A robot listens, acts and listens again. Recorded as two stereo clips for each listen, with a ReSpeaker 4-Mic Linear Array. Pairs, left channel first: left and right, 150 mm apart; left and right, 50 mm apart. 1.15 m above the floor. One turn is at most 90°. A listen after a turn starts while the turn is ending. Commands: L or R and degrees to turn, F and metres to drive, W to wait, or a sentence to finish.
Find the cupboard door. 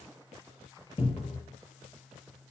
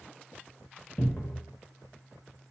L35
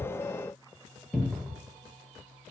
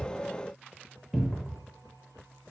Facing the cupboard door.